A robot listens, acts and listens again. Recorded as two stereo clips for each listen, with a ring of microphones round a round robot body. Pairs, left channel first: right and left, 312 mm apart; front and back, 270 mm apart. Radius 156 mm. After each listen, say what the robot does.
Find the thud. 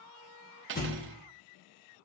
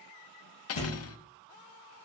Turn 25° right.
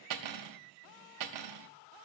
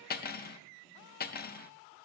Facing where the thud came from. I can't hear it now.